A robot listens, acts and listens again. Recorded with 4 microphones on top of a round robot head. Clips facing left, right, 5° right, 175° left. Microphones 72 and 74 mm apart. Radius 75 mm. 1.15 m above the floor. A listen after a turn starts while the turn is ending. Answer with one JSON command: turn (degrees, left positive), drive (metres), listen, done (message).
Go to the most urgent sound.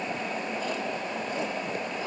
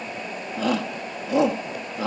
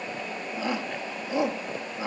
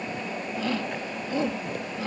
{"turn": -80}
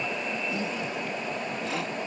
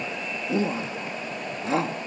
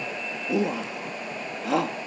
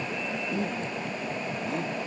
{"turn": -25}
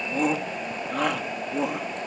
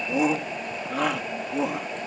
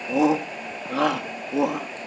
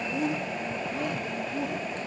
{"drive": 1.0}
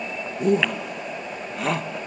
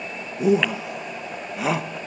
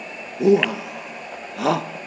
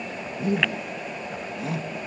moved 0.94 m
{"drive": 1.0}
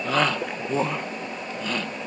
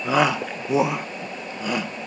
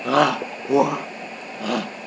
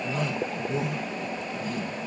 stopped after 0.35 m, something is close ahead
{"turn": -10}
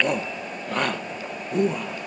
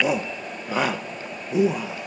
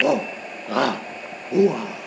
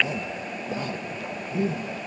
{"done": "Arrived at the shout, straight ahead."}